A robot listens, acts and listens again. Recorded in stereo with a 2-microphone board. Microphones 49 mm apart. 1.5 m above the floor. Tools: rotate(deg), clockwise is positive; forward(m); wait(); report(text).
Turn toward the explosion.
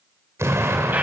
rotate(70)
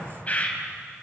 wait()
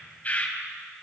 report("I heard an explosion, but can't make it out now. It was about straight ahead or 40° right.")